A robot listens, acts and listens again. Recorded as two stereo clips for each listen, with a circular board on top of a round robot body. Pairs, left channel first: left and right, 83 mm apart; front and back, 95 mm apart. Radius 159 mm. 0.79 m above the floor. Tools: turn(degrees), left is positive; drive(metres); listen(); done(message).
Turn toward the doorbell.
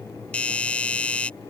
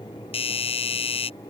turn(degrees=15)
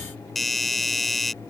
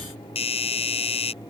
done("Found it: a doorbell, straight ahead.")